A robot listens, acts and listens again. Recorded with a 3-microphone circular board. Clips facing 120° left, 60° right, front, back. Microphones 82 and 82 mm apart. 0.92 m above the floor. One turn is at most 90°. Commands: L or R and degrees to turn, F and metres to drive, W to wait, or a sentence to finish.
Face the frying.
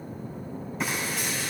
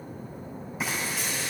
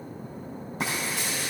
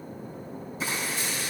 L25
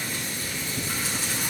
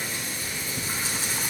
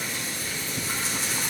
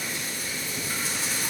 Found it: frying, straight ahead.